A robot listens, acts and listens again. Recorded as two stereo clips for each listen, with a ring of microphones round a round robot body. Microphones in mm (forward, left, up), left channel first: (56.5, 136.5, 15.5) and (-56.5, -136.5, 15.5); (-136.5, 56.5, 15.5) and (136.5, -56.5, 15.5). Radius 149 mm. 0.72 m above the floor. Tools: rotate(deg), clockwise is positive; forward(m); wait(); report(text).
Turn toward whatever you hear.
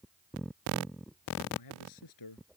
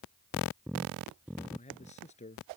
rotate(-90)
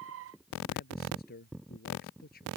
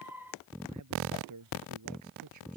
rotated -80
rotate(-10)
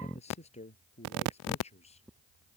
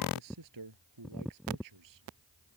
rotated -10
report("Found it: a man speaking, straight ahead.")